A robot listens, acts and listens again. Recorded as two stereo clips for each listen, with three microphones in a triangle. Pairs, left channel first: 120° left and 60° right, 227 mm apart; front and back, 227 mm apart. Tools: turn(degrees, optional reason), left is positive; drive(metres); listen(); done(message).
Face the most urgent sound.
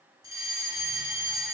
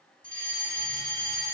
turn(degrees=-135, reason="The fire alarm: 135° right.")
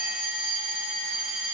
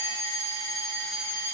done("Found it: a fire alarm, straight ahead.")